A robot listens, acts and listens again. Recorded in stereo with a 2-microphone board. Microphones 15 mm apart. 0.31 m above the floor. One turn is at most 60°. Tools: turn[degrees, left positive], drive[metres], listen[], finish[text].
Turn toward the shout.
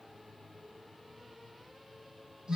Action: listen[]
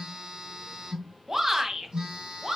Thought: The shout: about 15° right or 165° right.
Action: turn[-15]
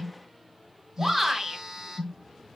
Action: finish[Found it: a shout, straight ahead, 2 to 4 m away.]